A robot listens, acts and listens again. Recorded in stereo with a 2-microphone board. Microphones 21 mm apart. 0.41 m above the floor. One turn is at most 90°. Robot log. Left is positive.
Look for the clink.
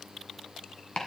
cmd idle
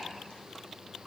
cmd idle
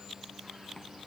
end: I can't make out a clink, only chopping.